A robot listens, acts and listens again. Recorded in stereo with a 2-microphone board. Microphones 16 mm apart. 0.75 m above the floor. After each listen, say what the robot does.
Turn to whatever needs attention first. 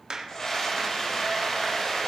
Turn 30° left.
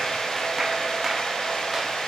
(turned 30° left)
Turn 120° left.
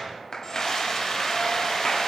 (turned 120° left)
Turn 35° left.
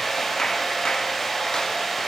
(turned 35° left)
Turn 15° left.
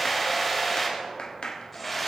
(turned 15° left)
Found it: a scream, straight ahead.